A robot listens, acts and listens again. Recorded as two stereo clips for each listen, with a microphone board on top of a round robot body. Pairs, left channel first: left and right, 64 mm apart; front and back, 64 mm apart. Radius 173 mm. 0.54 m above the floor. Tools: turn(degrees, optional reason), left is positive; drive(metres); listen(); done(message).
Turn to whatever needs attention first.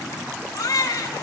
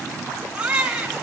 turn(degrees=105, reason="The baby crying: 105° left.")
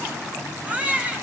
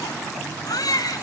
turn(degrees=-20, reason="The baby crying is now 20° right.")
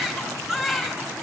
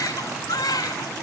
done("Facing the baby crying.")